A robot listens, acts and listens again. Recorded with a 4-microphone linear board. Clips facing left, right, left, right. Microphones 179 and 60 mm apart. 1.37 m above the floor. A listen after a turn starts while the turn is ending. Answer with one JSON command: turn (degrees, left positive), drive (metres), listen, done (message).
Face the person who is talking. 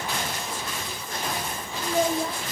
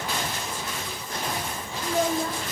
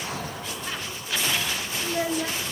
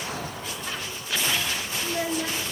{"turn": 30}
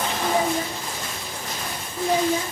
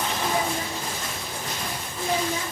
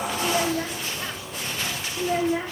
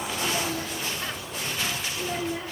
{"turn": 150}
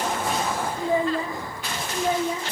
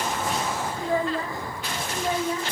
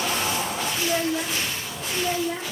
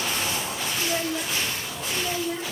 {"turn": 20}
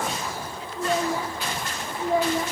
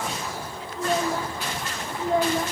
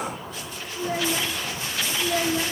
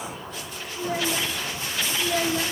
{"done": "Facing the child speaking."}